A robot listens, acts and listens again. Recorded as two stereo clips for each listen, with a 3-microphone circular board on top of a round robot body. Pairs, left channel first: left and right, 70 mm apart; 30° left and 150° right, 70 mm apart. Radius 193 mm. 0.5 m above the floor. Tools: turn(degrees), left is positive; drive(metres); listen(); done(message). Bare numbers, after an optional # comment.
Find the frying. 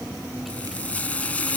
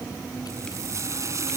# The frying: 160° left.
turn(160)
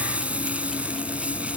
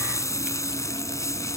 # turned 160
# The frying is now 15° right.
turn(-15)
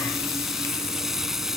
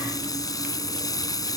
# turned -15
done("Found it: frying, straight ahead.")